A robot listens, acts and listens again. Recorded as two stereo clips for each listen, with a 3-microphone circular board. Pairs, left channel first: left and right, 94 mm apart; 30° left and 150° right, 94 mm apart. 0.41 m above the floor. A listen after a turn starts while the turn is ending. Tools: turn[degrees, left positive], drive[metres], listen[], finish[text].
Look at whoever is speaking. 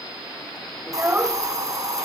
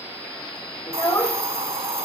Thought: The child speaking: 20° right.
Action: turn[-20]
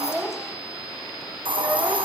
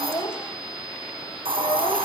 Action: listen[]
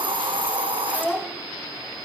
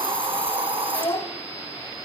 Action: finish[Facing the child speaking, 1 to 2 m away.]